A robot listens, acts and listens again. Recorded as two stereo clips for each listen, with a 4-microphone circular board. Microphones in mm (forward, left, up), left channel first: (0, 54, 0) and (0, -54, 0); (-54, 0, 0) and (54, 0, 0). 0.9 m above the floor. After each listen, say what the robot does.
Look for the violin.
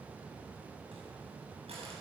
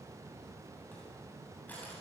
Keep listening.
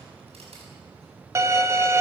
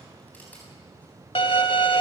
Turn 150° right.
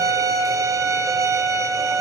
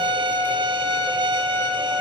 Turn 35° right.
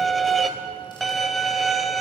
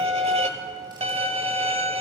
Found it: a violin, straight ahead, 1 to 2 m away.